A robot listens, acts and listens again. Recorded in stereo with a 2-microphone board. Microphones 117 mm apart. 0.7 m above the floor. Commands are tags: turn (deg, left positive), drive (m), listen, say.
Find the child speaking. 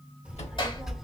<turn deg="30"/>
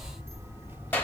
<turn deg="-15"/>
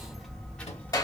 <turn deg="15"/>
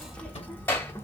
<turn deg="20"/>
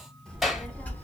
<turn deg="15"/>
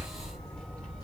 <turn deg="10"/>
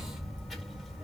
<say>Found it: a child speaking, straight ahead, 1 to 2 m away.</say>